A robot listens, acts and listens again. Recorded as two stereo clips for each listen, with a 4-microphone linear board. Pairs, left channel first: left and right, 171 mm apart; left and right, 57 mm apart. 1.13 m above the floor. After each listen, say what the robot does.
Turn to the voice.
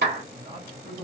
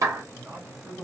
Turn 50° right.
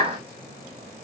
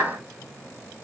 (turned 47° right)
Keep listening.
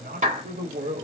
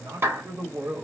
Turn 45° right.
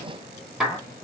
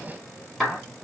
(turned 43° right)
Turn 25° left.
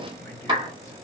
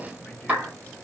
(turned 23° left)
Keep listening.
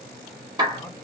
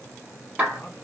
Keep listening.
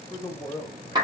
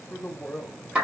Turn 25° left.
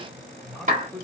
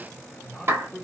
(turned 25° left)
Facing the man speaking, 1 to 2 m away.